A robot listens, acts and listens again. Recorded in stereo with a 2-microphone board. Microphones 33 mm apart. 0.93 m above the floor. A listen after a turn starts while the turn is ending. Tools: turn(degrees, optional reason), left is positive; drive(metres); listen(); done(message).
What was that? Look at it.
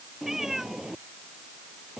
turn(degrees=-30)
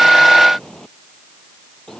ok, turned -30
turn(degrees=20, reason="So it is at 20° left.")
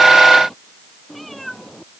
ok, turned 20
done("Facing the cat meowing.")